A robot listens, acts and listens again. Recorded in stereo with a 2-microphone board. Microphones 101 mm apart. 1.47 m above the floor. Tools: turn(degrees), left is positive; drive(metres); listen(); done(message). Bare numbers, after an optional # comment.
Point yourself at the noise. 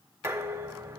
# The dishes clattering: about 25° right or 155° right.
turn(-25)
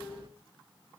# So it is at 130° right.
turn(-130)
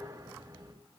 # The dishes clattering is now 40° right.
turn(-40)
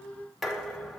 done("Found it: dishes clattering, straight ahead.")